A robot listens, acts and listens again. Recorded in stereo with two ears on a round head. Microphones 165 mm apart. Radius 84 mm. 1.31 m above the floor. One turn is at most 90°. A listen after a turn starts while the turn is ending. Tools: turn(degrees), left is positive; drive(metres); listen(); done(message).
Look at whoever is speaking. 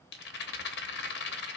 listen()
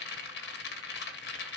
listen()
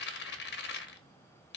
done("I can't make out anyone speaking to turn to.")